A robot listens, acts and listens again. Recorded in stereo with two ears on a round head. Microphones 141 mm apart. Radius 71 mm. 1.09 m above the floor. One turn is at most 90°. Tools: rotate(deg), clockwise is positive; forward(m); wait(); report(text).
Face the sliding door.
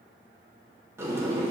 rotate(20)
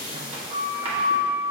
rotate(90)
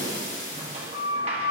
rotate(35)
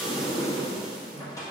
rotate(-20)
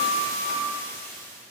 report("Found it: a sliding door, straight ahead, 1 to 2 m away.")